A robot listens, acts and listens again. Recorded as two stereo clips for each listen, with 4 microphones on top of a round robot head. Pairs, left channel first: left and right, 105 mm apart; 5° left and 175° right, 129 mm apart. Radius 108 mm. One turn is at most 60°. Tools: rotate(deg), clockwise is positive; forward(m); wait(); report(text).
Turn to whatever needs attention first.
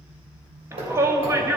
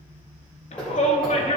rotate(30)
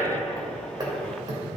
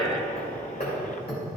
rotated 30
rotate(-10)
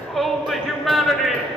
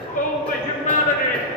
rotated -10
report("Facing the shout, 1 to 2 m away.")